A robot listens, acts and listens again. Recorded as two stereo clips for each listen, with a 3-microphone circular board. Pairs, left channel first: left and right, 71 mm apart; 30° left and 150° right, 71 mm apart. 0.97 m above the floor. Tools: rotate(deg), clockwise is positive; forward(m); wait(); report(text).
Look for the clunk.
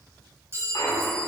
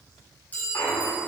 rotate(-80)
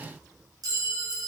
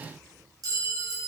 report("Facing where the clunk came from. I can't hear it now.")